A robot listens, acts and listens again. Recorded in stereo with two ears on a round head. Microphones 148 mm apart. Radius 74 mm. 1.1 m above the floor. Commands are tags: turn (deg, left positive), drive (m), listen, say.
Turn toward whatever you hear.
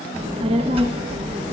<turn deg="-35"/>
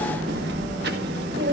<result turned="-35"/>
<turn deg="-110"/>
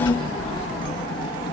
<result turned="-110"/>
<turn deg="25"/>
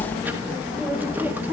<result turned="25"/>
<turn deg="-10"/>
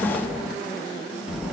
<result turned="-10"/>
<say>Found it: a child speaking, straight ahead, 1 to 2 m away.</say>